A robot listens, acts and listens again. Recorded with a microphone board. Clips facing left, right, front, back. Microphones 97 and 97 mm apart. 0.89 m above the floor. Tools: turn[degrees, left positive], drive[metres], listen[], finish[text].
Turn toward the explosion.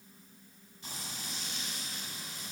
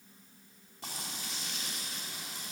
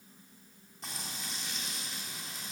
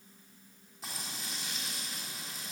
Action: listen[]
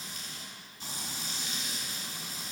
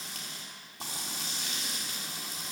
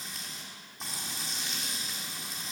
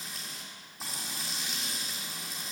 Action: listen[]
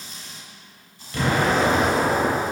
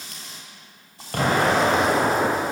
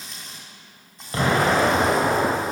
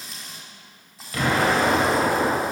Thought: The explosion: 55° right.
Action: turn[-55]
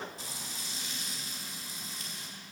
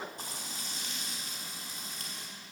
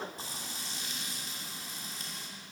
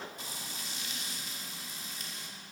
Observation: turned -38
Thought: Nothing new. It was at 20° right.
Action: turn[-20]
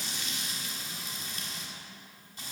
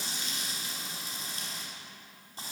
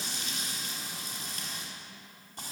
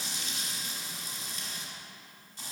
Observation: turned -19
Action: finish[Facing where the explosion came from. I can't hear it now.]